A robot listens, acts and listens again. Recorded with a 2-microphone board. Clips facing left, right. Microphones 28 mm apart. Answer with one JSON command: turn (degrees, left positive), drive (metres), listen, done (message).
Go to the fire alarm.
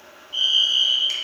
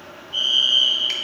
{"turn": 30}
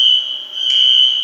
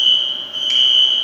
{"turn": 140}
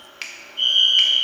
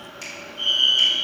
{"turn": 55}
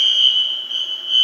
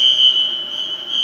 {"turn": 20}
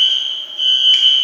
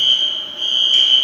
{"drive": 1.0}
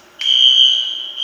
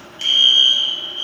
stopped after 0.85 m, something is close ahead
{"turn": 10}
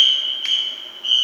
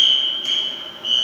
{"done": "I am next to the fire alarm."}